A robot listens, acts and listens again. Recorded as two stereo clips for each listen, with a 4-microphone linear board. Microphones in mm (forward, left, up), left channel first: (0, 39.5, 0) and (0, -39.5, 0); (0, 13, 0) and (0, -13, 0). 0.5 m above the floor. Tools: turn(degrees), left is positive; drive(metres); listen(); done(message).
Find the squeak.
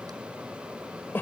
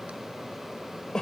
listen()
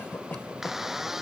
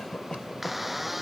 turn(degrees=-30)
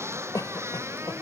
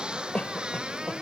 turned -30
turn(degrees=-145)
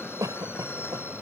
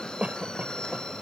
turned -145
listen()
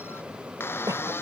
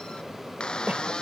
turn(degrees=30)
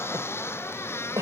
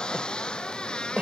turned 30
turn(degrees=35)
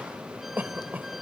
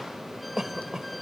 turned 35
listen()
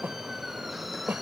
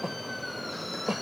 listen()
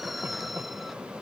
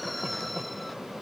done("Facing the squeak.")